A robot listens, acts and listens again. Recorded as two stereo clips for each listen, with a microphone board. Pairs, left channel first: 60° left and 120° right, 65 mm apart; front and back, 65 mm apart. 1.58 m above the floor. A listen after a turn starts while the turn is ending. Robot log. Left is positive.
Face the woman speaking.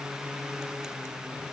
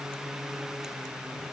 cmd idle
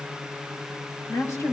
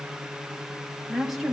note: The woman speaking: 90° left.
cmd yaw +90
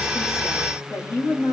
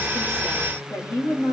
note: The woman speaking is now 20° left.
cmd yaw +20
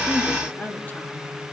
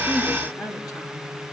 end: Found it: a woman speaking, straight ahead, 2 to 4 m away.